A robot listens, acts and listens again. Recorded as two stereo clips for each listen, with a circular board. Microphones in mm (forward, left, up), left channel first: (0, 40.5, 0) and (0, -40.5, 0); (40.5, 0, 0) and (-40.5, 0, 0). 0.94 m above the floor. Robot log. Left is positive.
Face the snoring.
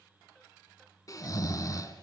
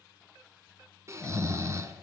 note: The snoring: 130° left.
cmd yaw +130
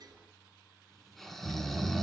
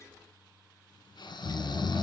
end: Facing the snoring.